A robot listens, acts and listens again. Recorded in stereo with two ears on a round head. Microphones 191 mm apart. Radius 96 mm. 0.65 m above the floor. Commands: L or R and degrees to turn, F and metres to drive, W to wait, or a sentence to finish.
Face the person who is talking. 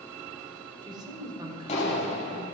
R20
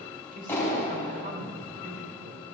R135
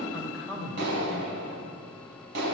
Found it: a man speaking, straight ahead, 2 to 4 m away.